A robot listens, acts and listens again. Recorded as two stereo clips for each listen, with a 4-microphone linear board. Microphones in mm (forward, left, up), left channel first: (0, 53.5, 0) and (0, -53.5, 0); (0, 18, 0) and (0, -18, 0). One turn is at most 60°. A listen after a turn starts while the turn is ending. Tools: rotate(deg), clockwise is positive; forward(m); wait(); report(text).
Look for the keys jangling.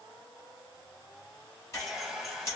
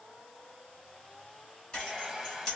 rotate(-30)
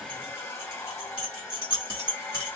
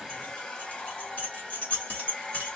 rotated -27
rotate(-60)
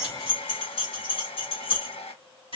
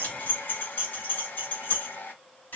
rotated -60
rotate(-60)
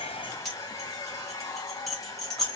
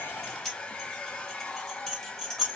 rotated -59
report("Facing the keys jangling, 2 to 4 m away.")